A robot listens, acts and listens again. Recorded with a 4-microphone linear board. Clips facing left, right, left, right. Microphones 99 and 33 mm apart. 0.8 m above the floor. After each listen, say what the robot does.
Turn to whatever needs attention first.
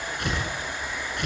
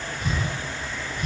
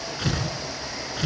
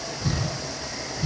Keep listening.
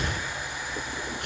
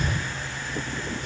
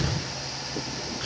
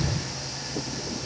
Keep listening.
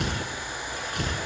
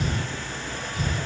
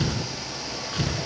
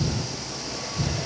I can't make out anything urgent, only tearing paper.